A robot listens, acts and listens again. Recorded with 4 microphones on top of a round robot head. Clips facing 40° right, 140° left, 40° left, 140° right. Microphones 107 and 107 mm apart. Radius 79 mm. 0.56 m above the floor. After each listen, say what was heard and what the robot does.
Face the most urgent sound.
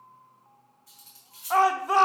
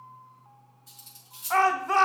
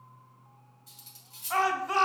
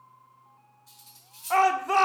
The shout: 115° right. Turn 115° right.
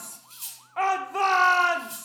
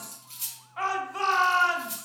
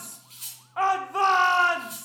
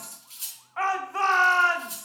The shout is now 25° right. Turn 25° right.
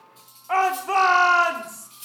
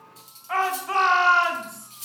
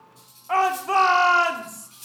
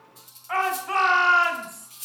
Facing the shout.